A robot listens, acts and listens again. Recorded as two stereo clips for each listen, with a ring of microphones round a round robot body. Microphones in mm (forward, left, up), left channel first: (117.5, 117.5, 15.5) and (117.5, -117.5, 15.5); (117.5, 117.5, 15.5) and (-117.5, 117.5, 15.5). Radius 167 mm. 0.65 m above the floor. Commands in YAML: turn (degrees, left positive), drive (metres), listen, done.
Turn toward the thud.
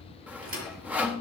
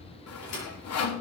turn: -60
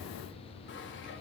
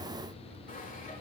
done: "Facing where the thud came from. I can't hear it now."